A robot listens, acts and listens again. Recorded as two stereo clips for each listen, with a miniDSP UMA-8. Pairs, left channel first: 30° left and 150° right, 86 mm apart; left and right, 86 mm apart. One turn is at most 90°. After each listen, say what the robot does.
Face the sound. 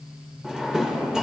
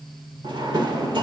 Turn 65° right.
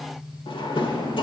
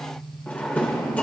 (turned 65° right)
Turn 15° left.
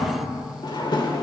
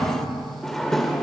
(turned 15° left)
Facing the drawer, 2 to 4 m away.